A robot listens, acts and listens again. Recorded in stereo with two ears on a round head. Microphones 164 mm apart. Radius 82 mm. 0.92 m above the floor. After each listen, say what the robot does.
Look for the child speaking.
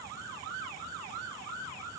Keep listening.
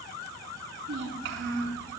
Turn 70° right.
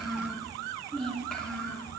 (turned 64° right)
Facing the child speaking, over 4 m away.